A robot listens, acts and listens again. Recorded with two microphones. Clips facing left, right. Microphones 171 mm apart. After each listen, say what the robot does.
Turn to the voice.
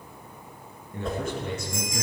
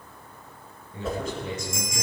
Turn 60° left.
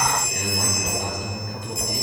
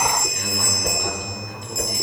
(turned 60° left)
Turn 55° left.
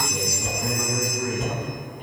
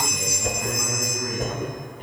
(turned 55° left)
Facing the man speaking.